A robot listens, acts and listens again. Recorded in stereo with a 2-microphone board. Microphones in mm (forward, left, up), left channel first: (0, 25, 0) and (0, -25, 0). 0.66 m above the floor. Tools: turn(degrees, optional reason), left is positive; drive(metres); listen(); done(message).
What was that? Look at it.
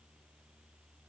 listen()
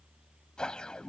turn(degrees=15, reason="The whoosh: about 15° left or 165° left.")
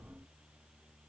listen()
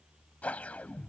turn(degrees=150, reason="So it is at 150° left.")
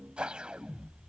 turn(degrees=-20, reason="The whoosh is now 20° right.")
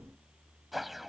done("Facing the whoosh.")